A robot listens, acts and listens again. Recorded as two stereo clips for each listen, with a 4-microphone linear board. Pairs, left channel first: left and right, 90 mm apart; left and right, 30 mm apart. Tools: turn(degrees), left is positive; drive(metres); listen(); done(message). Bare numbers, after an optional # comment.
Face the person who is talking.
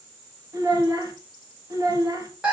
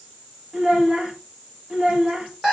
# The child speaking: about 40° right or 140° right.
turn(-40)
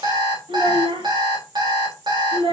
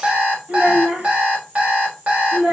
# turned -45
# So it is at 95° right.
turn(-95)
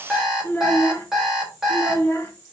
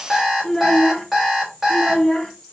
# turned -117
# The child speaking is now 25° left.
turn(25)
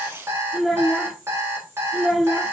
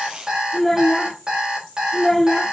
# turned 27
done("Facing the child speaking, 2 to 4 m away.")